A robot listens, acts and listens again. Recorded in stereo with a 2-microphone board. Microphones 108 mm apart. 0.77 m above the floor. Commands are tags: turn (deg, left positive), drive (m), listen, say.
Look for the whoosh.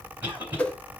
<turn deg="30"/>
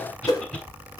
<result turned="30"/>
<turn deg="140"/>
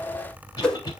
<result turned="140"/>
<turn deg="10"/>
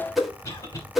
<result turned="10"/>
<say>Facing the whoosh.</say>